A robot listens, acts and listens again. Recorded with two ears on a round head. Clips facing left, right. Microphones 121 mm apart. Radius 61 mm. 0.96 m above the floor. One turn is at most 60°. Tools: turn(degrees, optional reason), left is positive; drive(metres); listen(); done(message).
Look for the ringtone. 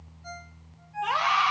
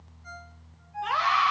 turn(degrees=60, reason="The ringtone: about 65° left or 115° left.")
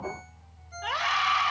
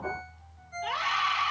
turn(degrees=55, reason="So it is at 55° left.")
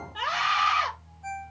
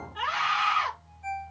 done("Found it: a ringtone, straight ahead.")